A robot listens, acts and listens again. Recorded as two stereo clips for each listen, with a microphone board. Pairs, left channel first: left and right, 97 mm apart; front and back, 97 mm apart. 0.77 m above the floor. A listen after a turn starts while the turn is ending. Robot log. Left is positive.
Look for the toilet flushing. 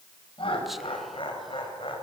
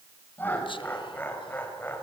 cmd idle
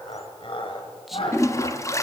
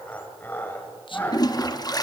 note: The toilet flushing: 35° left.
cmd yaw +35
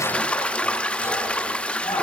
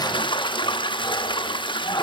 note: The toilet flushing is now 15° left.
cmd yaw +15
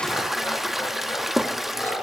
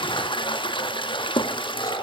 end: Found it: a toilet flushing, straight ahead, 1 to 2 m away.